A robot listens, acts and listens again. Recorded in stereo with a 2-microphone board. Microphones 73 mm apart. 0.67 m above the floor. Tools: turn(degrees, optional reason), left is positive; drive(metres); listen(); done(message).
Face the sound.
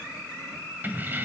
turn(degrees=-25, reason="The keys jangling: about 25° right or 155° right.")
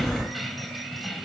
done("Found it: keys jangling, straight ahead.")